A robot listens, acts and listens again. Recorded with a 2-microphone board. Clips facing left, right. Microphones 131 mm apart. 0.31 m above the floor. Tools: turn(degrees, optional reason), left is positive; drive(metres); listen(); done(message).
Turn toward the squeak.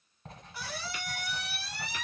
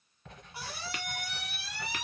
turn(degrees=-25, reason="The squeak: about 25° right or 155° right.")
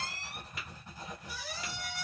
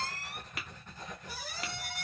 turn(degrees=-125, reason="So it is at 125° right.")
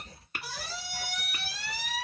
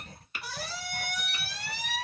done("Found it: a squeak, straight ahead, 1 to 2 m away.")